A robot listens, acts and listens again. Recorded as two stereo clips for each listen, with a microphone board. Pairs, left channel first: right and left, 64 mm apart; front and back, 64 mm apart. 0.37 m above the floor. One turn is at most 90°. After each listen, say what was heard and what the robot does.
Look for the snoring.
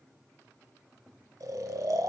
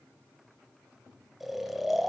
The snoring: 95° left. Turn 90° left.
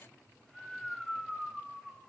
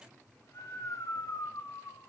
Facing the snoring, under 1 m away.